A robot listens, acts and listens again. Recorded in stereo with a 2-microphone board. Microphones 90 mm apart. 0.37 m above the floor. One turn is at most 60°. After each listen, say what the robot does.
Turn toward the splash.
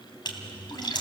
Turn 55° left.
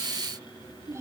Keep listening.
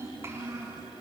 I heard a splash, but can't make it out now. It was about straight ahead or 70° left.